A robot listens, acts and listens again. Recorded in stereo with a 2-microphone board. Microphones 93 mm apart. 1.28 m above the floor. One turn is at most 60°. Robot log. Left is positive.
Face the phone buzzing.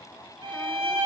cmd idle
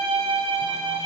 cmd idle
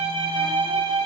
end: I can't make out a phone buzzing to turn to.